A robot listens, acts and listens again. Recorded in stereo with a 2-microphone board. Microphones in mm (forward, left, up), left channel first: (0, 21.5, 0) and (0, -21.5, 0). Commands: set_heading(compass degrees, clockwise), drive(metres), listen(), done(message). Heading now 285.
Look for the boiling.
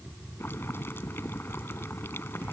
set_heading(220)
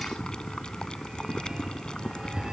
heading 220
set_heading(200)
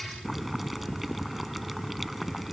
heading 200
done("Found it: boiling, straight ahead.")